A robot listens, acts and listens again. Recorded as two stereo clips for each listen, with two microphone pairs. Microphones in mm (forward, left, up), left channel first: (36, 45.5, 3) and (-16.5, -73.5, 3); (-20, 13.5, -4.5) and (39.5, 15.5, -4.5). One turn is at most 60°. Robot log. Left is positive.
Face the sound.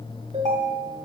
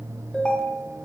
note: The ringtone: 105° right.
cmd yaw -60
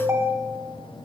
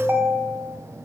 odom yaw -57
note: The ringtone is now 50° right.
cmd yaw -50
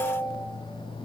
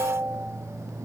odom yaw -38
note: The ringtone is now 10° right.
cmd yaw -10
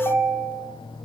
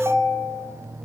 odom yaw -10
end: Facing the ringtone, 1 to 2 m away.